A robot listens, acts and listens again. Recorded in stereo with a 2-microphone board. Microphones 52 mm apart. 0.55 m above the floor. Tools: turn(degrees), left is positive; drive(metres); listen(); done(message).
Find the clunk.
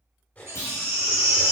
turn(degrees=75)
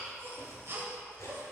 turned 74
listen()
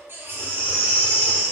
done("I heard a clunk, but can't make it out now. It was about straight ahead or 30° left.")